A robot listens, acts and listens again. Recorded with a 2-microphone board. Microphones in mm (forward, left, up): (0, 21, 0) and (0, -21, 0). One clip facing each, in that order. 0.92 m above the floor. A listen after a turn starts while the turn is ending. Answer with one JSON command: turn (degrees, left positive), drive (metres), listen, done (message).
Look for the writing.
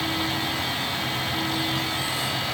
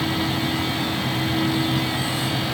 {"listen": true}
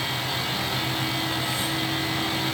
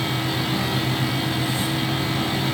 {"listen": true}
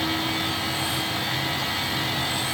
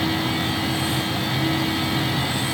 {"done": "I can't make out writing."}